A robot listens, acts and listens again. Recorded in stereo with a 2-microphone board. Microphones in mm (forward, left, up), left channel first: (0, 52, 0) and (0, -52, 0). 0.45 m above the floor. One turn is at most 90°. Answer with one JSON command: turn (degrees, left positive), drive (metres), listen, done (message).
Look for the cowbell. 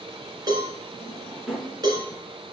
{"turn": -40}
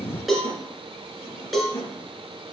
{"done": "Facing the cowbell, 2 to 4 m away."}